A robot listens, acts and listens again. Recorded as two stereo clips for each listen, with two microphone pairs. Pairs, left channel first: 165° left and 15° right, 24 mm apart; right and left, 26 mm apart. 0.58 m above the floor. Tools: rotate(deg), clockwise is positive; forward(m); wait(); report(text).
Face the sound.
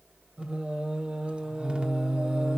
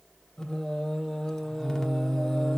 rotate(20)
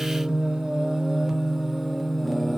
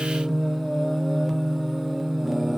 rotate(-155)
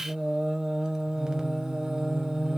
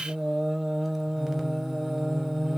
rotate(-15)
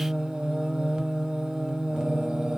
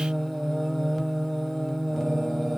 report("Found it: singing, straight ahead, 1 to 2 m away.")